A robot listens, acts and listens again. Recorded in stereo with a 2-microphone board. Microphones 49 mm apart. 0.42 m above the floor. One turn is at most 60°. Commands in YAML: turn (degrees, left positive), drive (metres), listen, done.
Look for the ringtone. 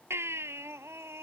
listen: true
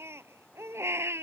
listen: true
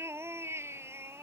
done: "I can't make out a ringtone to turn to."